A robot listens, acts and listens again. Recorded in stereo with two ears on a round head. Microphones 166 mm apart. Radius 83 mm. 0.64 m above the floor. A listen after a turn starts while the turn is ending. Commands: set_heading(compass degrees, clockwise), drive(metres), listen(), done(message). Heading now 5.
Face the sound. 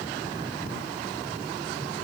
listen()
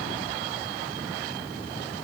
listen()
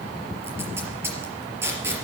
set_heading(35)
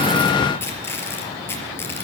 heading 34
set_heading(19)
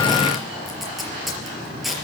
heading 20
done("Found it: tape being pulled, straight ahead, over 4 m away.")